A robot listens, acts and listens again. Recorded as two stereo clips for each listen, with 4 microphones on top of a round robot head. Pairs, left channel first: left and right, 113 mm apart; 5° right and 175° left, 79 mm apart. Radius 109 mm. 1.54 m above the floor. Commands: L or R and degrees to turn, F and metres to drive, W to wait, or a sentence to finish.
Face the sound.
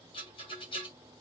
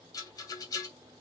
L35
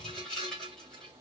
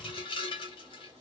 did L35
Facing the rattle.